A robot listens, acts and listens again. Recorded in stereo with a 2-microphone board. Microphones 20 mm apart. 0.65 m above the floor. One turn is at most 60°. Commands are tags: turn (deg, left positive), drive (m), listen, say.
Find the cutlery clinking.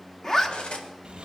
<turn deg="60"/>
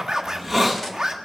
<listen/>
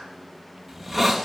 <listen/>
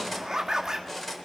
<say>Found it: cutlery clinking, straight ahead, 1 to 2 m away.</say>